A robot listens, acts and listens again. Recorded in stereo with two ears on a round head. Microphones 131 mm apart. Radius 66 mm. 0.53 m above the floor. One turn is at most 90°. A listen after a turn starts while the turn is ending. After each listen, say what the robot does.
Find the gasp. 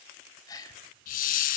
Turn 25° left.
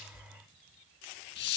Keep listening.
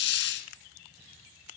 I heard a gasp, but can't make it out now. It was about straight ahead or 130° left.